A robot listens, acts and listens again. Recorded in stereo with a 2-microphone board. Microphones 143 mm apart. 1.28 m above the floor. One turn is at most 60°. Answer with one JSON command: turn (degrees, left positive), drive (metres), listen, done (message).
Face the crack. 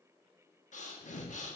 {"listen": true}
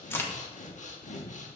{"turn": 15}
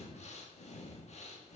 {"listen": true}
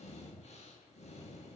{"done": "I heard a crack, but can't make it out now. It was about straight ahead or 150° left."}